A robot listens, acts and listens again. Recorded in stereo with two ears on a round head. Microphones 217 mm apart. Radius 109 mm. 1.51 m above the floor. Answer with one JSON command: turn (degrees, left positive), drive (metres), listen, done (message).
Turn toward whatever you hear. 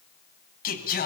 {"turn": 40}
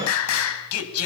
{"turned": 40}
{"turn": 115}
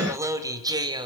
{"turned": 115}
{"turn": -20}
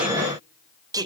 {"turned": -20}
{"turn": -15}
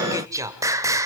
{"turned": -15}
{"turn": -15}
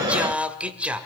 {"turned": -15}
{"done": "Found it: singing, straight ahead."}